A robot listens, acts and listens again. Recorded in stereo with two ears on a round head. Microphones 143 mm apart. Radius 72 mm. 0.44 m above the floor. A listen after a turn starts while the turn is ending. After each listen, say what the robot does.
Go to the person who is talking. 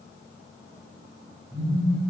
Keep listening.
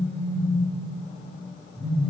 Keep listening.
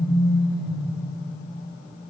I can't make out anyone speaking to turn to.